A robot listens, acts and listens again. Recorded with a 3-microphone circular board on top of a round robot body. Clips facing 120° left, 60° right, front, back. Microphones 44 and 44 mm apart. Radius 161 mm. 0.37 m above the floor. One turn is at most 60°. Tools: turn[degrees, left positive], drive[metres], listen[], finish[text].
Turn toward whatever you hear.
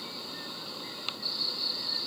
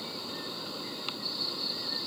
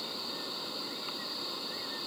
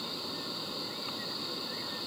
Action: listen[]
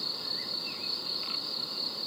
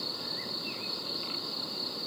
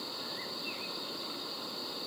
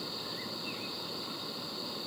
Action: listen[]
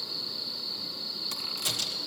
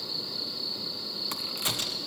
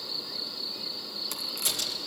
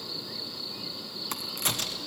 Thought: The crack: 125° right.
Action: turn[-60]
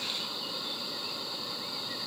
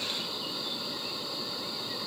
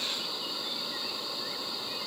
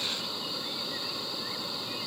Thought: Nothing new. It was at 65° right.
Action: turn[-60]
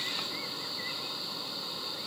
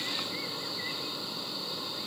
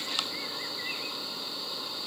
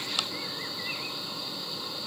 Action: finish[I heard a crack from this way, but can't make it out now.]